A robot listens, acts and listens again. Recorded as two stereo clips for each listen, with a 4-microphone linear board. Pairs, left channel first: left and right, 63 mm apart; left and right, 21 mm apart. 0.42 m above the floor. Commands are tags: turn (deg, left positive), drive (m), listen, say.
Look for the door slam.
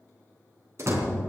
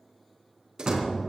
<turn deg="-45"/>
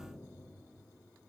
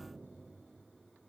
<listen/>
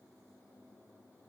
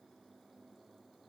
<say>I heard a door slam, but can't make it out now. It was about straight ahead or 90° right.</say>